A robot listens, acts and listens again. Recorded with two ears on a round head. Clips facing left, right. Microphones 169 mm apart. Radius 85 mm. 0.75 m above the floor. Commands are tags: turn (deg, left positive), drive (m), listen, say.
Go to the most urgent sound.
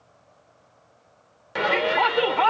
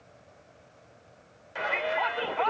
<turn deg="90"/>
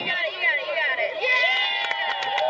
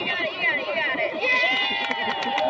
<drive m="1.0"/>
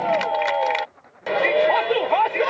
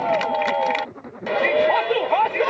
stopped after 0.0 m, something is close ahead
<say>Blocked. The shout is further on, straight ahead.</say>